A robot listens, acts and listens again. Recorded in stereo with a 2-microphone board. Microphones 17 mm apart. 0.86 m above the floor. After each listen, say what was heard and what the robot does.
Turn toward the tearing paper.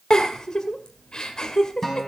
Keep listening.
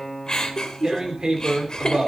The tearing paper: about 50° right or 130° right. Turn 50° right.
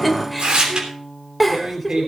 So it is at 75° right. Turn 75° right.
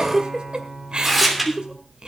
Found it: tearing paper, straight ahead.